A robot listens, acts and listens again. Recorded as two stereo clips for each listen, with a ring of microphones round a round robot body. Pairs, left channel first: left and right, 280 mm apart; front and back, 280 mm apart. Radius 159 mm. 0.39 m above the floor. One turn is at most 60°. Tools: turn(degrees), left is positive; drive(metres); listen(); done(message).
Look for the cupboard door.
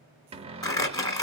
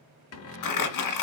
turn(degrees=-25)
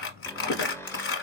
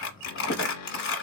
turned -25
turn(degrees=10)
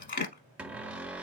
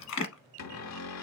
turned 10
done("Facing the cupboard door, under 1 m away.")